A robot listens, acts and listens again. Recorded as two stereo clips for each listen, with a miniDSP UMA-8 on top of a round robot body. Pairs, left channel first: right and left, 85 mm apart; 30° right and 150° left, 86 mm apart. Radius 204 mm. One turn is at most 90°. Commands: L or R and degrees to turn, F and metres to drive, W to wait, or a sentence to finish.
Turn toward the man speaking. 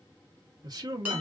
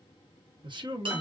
L90
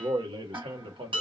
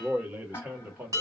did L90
L80
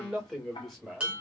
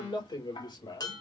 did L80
Facing the man speaking, 2 to 4 m away.